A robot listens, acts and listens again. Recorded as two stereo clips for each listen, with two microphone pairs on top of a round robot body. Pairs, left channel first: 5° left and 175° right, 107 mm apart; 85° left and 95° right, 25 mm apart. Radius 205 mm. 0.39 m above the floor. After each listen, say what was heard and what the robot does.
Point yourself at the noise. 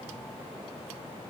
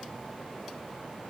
Keep listening.
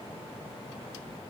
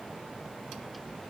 Keep listening.
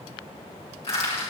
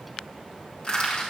The crushing: 30° left. Turn 30° left.
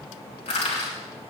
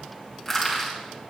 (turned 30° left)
Found it: crushing, straight ahead, over 4 m away.